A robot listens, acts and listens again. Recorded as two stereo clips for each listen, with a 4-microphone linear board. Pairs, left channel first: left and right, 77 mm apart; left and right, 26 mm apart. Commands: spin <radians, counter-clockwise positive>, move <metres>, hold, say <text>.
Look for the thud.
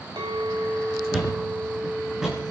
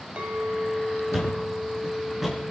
spin -0.52
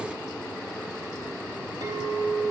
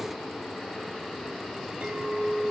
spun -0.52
hold
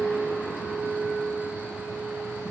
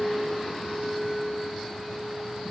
say I heard a thud, but can't make it out now. It was about 25° left or 145° right.